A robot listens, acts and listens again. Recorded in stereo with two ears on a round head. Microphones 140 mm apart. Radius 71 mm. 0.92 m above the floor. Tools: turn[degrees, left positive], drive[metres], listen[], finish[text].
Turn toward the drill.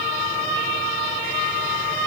Action: listen[]
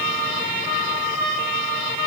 Action: listen[]
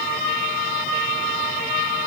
Action: finish[I can't make out a drill to turn to.]